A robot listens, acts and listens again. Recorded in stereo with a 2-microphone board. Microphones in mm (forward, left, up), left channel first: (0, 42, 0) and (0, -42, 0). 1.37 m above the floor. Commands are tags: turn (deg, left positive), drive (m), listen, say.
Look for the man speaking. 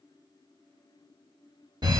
<listen/>
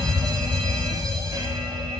<listen/>
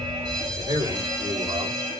<turn deg="-65"/>
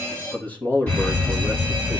<turn deg="25"/>
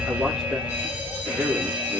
<say>Found it: a man speaking, straight ahead.</say>